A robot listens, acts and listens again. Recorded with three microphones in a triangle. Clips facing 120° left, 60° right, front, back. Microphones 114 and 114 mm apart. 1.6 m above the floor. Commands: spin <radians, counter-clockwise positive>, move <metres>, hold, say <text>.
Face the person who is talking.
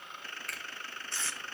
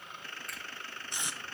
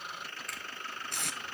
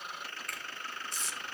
hold
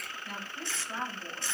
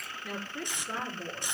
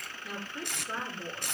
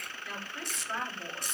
spin -1.22
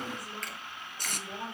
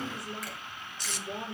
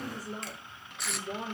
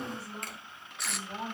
say Facing the woman speaking.